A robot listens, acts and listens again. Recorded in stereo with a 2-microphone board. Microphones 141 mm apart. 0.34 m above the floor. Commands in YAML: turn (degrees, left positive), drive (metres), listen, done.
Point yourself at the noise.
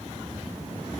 listen: true
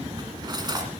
turn: -30
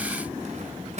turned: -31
turn: -120
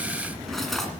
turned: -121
done: "Facing the cutlery clinking."